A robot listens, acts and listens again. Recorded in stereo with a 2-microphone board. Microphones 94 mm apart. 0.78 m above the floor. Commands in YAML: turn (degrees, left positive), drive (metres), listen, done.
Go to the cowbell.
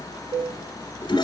turn: -60
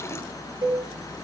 turn: -60
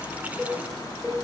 drive: 1.0
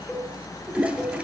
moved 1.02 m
drive: 1.0
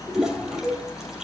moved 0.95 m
drive: 1.0
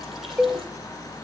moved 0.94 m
drive: 1.0
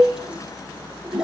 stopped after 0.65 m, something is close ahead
turn: 10
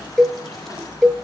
done: "Arrived at the cowbell, straight ahead."